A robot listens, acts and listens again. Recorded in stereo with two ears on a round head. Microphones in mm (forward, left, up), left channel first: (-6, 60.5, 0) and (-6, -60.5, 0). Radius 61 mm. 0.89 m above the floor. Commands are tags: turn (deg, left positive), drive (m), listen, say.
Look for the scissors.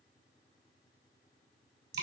<listen/>
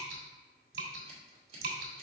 <turn deg="-45"/>
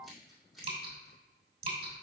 <say>Found it: scissors, straight ahead, 2 to 4 m away.</say>